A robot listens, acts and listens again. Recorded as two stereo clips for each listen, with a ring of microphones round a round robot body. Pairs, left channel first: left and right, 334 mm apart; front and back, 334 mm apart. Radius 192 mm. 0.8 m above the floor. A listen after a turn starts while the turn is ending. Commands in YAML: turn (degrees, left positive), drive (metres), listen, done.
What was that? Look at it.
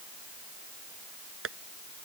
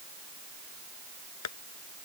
turn: -40
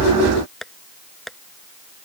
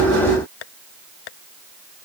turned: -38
done: "Found it: tapping, straight ahead."